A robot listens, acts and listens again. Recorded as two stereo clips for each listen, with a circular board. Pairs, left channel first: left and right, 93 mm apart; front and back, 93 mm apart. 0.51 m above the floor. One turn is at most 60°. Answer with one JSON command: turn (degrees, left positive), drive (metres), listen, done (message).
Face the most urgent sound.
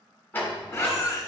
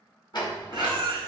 {"turn": 60}
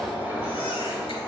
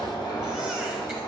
{"turn": 60}
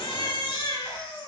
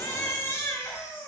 {"turn": 60}
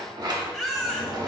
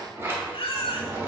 {"done": "Found it: a baby crying, straight ahead, under 1 m away."}